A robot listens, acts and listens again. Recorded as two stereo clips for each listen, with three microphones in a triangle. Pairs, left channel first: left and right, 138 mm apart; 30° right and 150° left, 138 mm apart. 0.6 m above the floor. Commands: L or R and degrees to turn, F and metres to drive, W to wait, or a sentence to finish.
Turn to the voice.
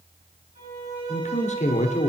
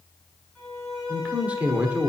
L70
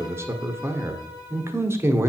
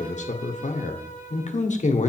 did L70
R20
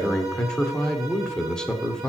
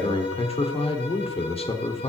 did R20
Facing the man speaking.